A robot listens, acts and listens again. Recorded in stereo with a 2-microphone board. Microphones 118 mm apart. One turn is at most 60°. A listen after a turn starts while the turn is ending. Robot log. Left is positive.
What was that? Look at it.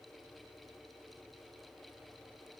cmd idle
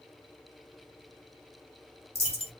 note: The dropped coin: about 55° left or 125° left.
cmd yaw +55
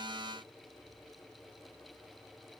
cmd idle
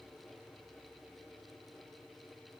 end: I heard a dropped coin, but can't make it out now. It was about straight ahead or 70° left.